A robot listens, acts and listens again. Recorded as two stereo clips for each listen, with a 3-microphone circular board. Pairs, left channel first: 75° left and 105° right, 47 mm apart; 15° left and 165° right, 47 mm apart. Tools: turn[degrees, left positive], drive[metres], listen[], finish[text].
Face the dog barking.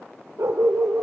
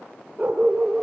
Thought: The dog barking: 95° right.
Action: turn[-95]
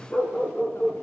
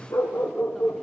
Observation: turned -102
Thought: The dog barking is now 20° left.
Action: turn[20]
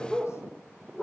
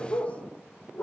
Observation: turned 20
Action: finish[Facing the dog barking.]